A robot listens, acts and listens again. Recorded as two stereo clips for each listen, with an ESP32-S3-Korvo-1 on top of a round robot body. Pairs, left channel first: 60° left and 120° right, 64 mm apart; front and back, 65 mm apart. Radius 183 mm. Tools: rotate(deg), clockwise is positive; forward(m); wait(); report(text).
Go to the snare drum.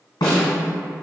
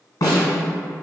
rotate(-40)
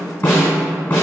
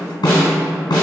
forward(1.0)
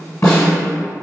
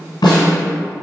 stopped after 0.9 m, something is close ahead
rotate(-10)
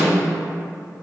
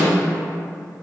wait()
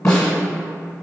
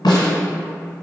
report("I am next to the snare drum.")